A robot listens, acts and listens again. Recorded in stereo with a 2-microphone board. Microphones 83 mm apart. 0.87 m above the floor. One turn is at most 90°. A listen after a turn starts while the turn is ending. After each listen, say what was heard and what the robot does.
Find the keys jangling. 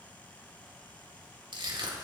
Keep listening.
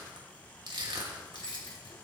Turn 90° left.
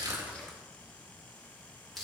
Keep listening.
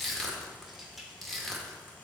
Facing the keys jangling, 1 to 2 m away.